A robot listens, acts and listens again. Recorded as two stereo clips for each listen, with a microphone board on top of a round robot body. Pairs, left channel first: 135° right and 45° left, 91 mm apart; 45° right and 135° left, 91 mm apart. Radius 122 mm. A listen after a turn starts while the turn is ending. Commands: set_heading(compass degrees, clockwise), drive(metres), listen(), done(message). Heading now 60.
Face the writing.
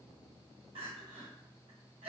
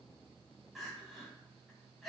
listen()
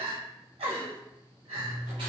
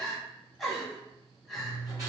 set_heading(340)
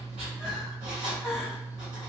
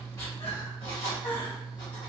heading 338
done("Facing the writing.")